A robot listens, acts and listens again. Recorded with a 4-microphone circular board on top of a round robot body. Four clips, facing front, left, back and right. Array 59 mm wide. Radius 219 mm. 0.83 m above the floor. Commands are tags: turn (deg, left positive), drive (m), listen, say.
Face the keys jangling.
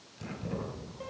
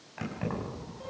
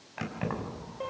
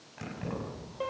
<turn deg="165"/>
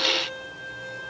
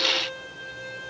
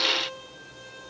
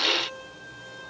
<listen/>
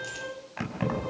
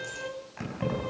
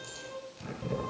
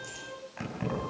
<say>Found it: keys jangling, straight ahead, over 4 m away.</say>